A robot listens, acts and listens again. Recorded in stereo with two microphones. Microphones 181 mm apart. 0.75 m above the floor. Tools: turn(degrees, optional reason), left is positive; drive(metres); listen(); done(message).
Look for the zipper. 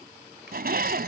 turn(degrees=-60, reason="The zipper: about 60° right or 120° right.")
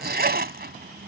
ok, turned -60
turn(degrees=-65, reason="So it is at 65° right.")
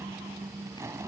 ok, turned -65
turn(degrees=-15, reason="The zipper is now 15° right.")
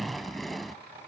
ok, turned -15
done("Found it: a zipper, straight ahead.")